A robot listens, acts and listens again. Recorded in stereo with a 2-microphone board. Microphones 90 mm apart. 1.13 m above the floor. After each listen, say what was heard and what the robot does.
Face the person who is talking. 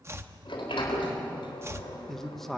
Turn 30° left.
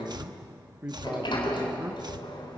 So it is at 25° right. Turn 25° right.
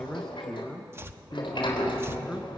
Facing the man speaking.